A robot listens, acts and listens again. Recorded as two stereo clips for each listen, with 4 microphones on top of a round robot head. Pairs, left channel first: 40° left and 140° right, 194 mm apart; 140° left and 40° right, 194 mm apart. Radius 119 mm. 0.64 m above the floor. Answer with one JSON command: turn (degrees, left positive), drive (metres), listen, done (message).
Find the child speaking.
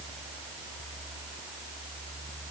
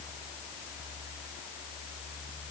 {"listen": true}
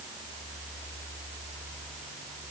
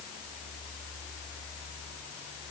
{"listen": true}
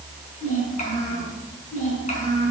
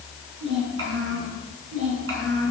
{"turn": -20}
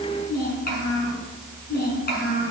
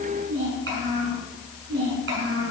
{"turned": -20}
{"done": "Facing the child speaking, over 4 m away."}